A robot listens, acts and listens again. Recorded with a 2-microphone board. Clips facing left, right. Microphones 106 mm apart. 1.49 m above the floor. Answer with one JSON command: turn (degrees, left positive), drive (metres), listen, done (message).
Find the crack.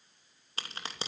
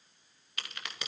{"turn": 35}
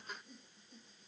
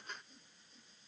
{"listen": true}
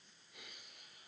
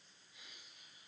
{"done": "I heard a crack, but can't make it out now. It was about straight ahead or 110° left."}